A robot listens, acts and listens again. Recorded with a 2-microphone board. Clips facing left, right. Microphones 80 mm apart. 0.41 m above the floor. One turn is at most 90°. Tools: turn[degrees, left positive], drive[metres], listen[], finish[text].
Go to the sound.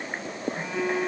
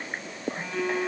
Action: turn[30]
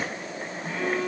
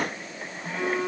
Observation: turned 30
Thought: So it is at 20° right.
Action: turn[-20]
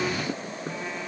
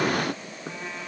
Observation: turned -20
Action: listen[]
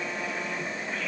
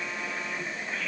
Action: listen[]
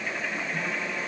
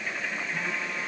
Action: finish[I heard a phone buzzing from this way, but can't make it out now. I did not reach it.]